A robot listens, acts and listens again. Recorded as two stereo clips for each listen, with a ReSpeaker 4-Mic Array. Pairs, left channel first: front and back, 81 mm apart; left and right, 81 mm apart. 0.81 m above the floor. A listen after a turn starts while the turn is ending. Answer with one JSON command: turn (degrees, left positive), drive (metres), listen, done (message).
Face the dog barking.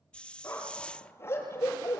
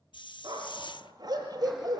{"turn": -60}
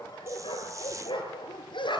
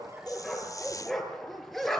{"done": "Found it: a dog barking, straight ahead, over 4 m away."}